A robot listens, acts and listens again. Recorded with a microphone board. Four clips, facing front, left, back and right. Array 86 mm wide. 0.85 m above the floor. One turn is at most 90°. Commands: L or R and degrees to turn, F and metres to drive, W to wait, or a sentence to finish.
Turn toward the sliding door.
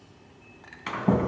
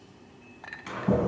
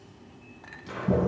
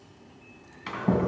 R15
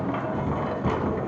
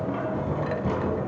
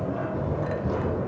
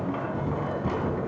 Found it: a sliding door, straight ahead.